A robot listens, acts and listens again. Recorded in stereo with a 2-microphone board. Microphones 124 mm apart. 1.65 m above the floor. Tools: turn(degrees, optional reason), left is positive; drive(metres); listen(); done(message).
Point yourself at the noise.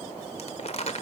turn(degrees=50, reason="The crumpling: about 50° left or 130° left.")
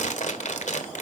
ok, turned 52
turn(degrees=75, reason="So it is at 75° left.")
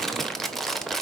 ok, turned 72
done("Facing the crumpling, 1 to 2 m away.")